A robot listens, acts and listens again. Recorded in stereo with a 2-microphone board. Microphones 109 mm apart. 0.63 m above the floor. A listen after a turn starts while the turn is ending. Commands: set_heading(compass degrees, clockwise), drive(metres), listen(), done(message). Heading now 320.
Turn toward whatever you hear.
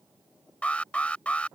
set_heading(290)
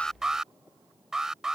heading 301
done("Facing the alarm.")